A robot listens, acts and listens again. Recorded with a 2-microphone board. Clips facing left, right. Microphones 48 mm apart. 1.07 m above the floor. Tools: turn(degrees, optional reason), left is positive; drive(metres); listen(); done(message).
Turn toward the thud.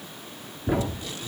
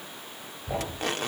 turn(degrees=65, reason="The thud: about 65° left or 115° left.")
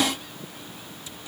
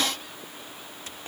listen()
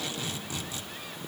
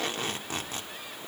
done("I heard a thud, but can't make it out now. It was about straight ahead or 50° left.")